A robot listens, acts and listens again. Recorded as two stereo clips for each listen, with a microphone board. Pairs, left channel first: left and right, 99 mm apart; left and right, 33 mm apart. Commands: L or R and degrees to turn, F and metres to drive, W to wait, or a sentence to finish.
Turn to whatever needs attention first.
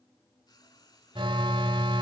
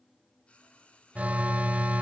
R55
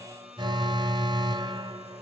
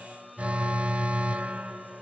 R55
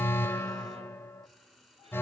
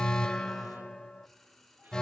L25
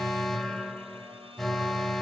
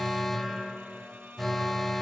Found it: an alarm, straight ahead.